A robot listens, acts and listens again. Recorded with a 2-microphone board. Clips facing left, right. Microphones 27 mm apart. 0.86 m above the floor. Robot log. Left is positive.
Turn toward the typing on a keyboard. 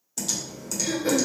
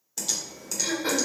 cmd yaw -30
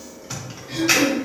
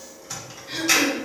note: So it is at 20° left.
cmd yaw +20
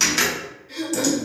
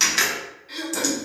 end: Found it: typing on a keyboard, straight ahead.